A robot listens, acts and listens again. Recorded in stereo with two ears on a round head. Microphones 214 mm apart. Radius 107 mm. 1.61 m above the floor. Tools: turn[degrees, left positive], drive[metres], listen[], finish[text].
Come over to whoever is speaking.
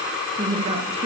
Thought: The woman speaking: about 25° right or 155° right.
Action: turn[-25]
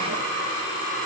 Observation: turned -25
Action: listen[]
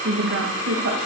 Thought: So it is at 130° right.
Action: turn[-130]
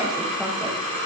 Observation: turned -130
Action: listen[]
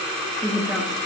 Action: drive[1.0]
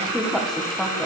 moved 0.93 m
Action: drive[1.0]
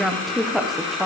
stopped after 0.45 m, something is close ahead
Action: finish[Arrived at the woman speaking, straight ahead.]